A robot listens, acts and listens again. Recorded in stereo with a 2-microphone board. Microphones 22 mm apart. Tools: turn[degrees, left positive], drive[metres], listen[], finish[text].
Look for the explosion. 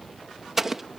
Action: turn[-30]
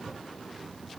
Action: listen[]
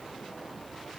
Action: finish[I heard an explosion, but can't make it out now. It was about 15° left or 135° right.]